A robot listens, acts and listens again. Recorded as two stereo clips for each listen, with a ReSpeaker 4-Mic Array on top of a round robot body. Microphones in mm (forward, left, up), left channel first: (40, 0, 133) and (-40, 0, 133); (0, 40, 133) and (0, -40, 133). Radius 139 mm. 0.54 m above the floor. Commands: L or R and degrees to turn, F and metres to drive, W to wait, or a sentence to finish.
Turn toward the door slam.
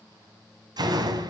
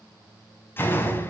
L150
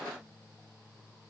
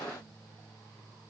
I heard a door slam from this way, but can't make it out now.